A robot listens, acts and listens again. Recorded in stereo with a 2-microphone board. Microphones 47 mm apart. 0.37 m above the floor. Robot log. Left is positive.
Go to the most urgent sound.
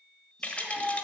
cmd yaw +30
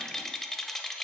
cmd idle
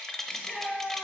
note: So it is at 145° left.
cmd yaw +145
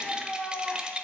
note: The shout is now 20° right.
cmd yaw -20
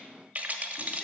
cmd idle
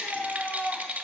cmd fwd 1.0
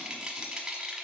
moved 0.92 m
cmd idle
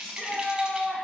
cmd fwd 1.0
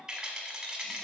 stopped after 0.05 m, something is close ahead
cmd idle
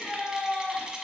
end: Arrived at the shout, straight ahead.